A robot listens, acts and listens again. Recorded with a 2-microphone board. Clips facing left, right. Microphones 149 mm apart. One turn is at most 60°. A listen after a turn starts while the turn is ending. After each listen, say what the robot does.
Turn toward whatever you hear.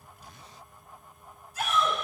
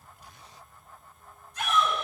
Turn 30° left.
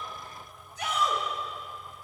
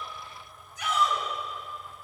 Turn 60° left.
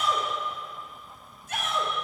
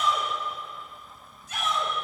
Turn 60° left.
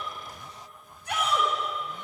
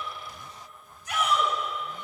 Turn 60° left.
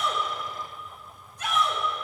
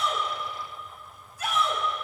Facing the shout.